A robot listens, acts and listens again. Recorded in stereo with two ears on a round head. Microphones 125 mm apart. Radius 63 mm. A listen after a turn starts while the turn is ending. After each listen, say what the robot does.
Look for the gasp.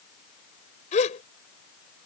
Turn 55° left.
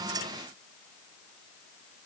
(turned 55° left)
Keep listening.
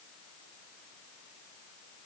I heard a gasp, but can't make it out now. It was about straight ahead or 70° left.